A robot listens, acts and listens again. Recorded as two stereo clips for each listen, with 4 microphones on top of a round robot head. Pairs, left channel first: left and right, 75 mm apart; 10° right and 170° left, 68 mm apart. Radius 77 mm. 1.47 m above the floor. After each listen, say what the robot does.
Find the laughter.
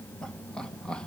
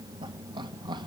Turn 170° left.
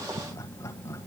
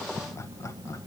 Turn 35° left.
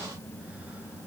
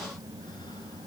Keep listening.
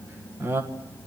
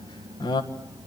Turn 25° right.
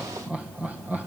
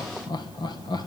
Turn 15° right.
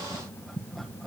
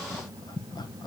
Found it: laughter, straight ahead, 1 to 2 m away.